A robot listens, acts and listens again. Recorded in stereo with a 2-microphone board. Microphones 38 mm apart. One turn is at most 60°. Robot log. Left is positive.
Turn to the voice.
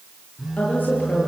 note: The woman speaking: about 45° left or 135° left.
cmd yaw +45
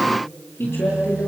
note: So it is at 90° left.
cmd yaw +60
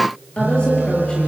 note: The woman speaking is now 25° left.
cmd yaw +25
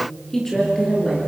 note: The woman speaking is now 10° left.
cmd yaw +10
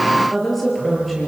end: Facing the woman speaking.